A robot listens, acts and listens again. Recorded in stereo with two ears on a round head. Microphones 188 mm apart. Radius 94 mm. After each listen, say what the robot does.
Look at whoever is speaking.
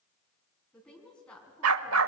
Turn 30° left.
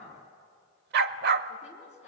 Turn 145° left.
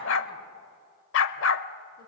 Keep listening.
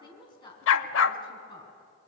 Turn 25° left.
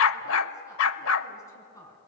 Turn 15° left.
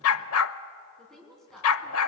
Facing the woman speaking, over 4 m away.